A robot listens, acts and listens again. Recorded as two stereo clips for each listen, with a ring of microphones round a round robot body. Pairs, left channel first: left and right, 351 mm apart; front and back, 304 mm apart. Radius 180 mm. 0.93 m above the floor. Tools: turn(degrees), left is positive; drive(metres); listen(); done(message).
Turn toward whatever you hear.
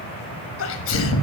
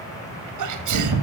turn(degrees=150)
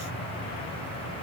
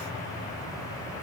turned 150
done("Facing where the sneeze came from. I can't hear it now.")